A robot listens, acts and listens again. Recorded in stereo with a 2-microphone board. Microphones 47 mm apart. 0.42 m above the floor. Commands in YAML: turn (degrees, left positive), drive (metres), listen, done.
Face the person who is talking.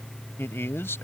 turn: 65
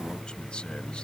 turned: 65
listen: true
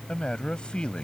turn: 25
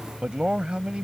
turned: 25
turn: -25
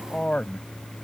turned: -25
turn: 25
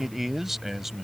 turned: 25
done: "Facing the man speaking."